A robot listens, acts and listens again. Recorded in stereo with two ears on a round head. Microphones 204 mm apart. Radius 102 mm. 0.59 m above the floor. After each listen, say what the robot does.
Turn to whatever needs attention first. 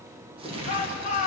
Turn 35° left.
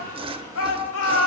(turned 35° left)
Turn 110° left.
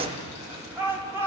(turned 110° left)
Turn 10° right.
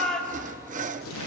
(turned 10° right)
Facing the shout.